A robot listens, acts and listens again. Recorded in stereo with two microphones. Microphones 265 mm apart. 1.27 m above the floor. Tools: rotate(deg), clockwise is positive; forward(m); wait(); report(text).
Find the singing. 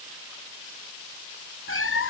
wait()
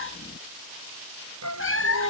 rotate(90)
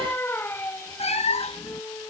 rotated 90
rotate(-10)
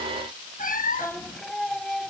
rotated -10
report("Facing the singing.")